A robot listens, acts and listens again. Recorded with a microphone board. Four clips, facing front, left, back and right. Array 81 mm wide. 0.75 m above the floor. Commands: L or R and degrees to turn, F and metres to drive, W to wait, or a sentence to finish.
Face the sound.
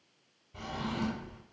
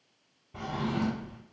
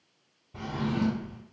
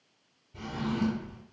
L105
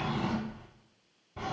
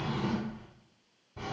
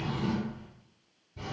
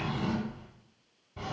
R10
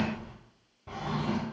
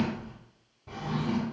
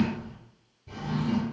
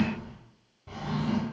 Found it: a drawer, straight ahead.